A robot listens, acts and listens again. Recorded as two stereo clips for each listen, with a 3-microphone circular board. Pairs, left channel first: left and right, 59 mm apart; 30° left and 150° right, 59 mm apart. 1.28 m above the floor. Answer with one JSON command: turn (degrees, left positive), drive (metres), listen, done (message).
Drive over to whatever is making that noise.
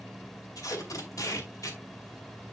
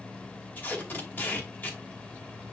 {"turn": 85}
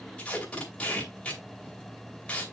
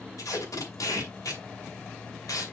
{"turn": 25}
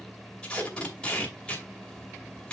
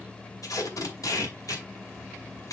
{"turn": 20}
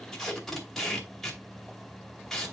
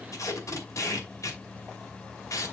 {"drive": 1.0}
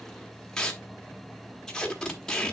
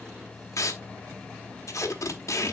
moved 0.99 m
{"turn": 15}
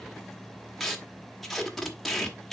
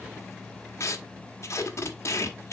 {"drive": 1.0}
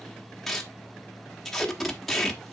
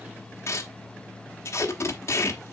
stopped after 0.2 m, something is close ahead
{"turn": 10}
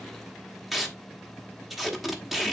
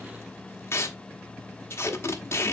{"done": "Arrived at the tape being pulled, straight ahead."}